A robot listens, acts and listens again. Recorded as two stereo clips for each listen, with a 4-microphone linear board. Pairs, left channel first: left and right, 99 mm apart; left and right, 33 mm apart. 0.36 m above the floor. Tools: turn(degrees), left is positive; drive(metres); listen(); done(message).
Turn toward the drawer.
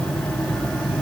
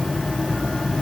listen()
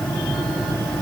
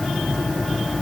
listen()
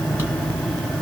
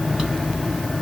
done("I can't make out a drawer.")